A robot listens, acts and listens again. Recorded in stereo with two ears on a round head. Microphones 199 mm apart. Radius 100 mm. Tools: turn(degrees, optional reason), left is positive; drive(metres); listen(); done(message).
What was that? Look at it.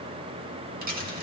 turn(degrees=-40, reason="The dropped coin: about 40° right or 140° right.")
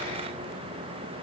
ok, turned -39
listen()
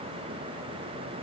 done("I heard a dropped coin, but can't make it out now. It was about straight ahead or 100° right.")